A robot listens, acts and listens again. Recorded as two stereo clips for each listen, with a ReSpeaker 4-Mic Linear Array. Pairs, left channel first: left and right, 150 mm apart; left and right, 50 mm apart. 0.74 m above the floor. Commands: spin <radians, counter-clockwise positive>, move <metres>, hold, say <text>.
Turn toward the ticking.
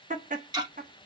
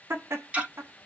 spin -0.44
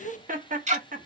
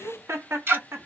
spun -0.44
spin -2.27
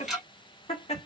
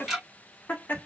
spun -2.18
say Found it: ticking, straight ahead, 1 to 2 m away.